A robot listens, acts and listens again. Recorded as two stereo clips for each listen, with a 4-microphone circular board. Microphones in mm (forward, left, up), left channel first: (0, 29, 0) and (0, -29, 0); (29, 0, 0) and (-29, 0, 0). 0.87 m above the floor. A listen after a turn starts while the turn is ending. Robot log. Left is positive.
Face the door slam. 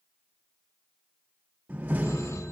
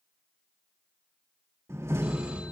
note: The door slam: 150° right.
cmd yaw -150
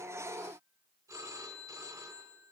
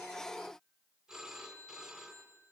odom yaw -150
end: I heard a door slam from this way, but can't make it out now.